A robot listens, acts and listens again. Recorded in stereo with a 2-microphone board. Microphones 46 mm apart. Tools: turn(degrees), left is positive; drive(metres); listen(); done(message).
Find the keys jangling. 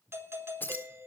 turn(degrees=50)
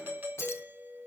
turn(degrees=80)
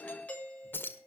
turn(degrees=50)
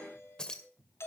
turn(degrees=15)
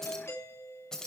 turn(degrees=10)
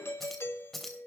done("Found it: keys jangling, straight ahead, 2 to 4 m away.")